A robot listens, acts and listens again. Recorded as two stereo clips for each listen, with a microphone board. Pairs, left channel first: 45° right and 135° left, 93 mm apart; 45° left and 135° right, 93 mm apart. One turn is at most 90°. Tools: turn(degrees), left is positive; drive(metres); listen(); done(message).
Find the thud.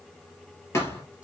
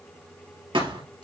turn(degrees=-90)
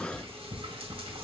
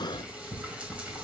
turn(degrees=-15)
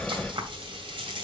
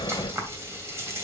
done("I heard a thud from this way, but can't make it out now.")